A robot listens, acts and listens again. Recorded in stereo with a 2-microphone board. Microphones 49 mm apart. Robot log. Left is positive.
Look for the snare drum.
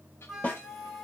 note: The snare drum: about 40° left or 140° left.
cmd yaw +40
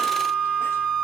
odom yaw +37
cmd idle
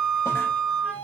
cmd idle
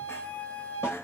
end: I heard a snare drum, but can't make it out now. It was about straight ahead or 105° left.